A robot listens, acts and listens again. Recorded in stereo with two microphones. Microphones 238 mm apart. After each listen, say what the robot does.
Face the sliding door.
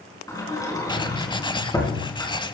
Turn 30° left.
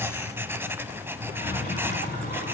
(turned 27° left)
Turn 135° left.
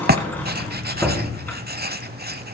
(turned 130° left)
Turn 10° left.
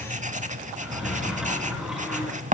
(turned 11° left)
Found it: a sliding door, straight ahead, over 4 m away.